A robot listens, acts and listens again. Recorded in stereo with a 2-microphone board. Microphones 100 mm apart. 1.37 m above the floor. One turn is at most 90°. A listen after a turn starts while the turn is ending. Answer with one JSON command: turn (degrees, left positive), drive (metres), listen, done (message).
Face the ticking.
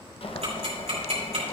{"turn": -90}
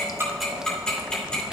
{"turn": 10}
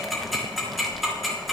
{"done": "Facing the ticking."}